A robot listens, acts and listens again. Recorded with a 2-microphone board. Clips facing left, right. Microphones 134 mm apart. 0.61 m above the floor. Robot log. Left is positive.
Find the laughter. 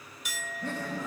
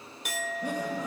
note: The laughter: about 20° right or 160° right.
cmd yaw -20
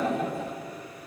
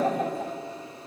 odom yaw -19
note: So it is at 140° right.
cmd yaw -140
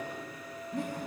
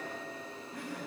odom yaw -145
note: The laughter is now 25° left.
cmd yaw +25
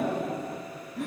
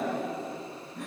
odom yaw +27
end: Facing the laughter, over 4 m away.